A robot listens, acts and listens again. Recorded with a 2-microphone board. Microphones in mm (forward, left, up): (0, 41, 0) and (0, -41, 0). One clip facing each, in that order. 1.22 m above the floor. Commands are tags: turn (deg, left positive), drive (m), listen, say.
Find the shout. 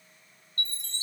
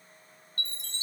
<listen/>
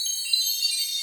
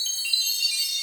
<listen/>
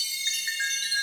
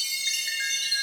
<say>I can't make out a shout to turn to.</say>